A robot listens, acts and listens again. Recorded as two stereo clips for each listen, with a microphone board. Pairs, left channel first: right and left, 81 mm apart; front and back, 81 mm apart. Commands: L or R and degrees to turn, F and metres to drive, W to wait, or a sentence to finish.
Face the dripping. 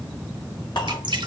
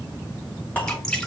L80
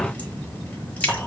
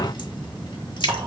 R15
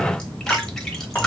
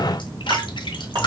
Facing the dripping, 1 to 2 m away.